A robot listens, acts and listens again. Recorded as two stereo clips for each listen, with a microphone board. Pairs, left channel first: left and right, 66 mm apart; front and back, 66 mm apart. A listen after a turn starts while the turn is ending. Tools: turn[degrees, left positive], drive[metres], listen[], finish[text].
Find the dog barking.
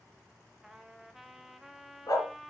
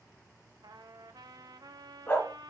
Thought: The dog barking: 65° left.
Action: turn[65]
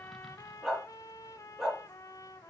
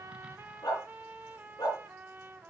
Action: finish[Facing the dog barking.]